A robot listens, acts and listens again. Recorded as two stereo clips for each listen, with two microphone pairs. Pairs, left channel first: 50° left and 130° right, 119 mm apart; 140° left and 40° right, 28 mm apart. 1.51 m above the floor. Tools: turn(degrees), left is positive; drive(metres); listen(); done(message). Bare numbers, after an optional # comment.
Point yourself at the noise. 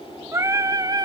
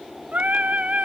# The singing: 75° right.
turn(-75)
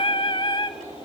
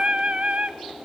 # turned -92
done("Found it: singing, straight ahead.")